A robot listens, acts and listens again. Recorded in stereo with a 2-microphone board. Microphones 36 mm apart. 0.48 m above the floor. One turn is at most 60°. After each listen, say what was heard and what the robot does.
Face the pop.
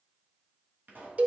The pop: about 55° right or 125° right. Turn 55° right.
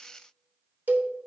Keep listening.
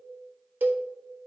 I heard a pop, but can't make it out now. It was about straight ahead or 70° right.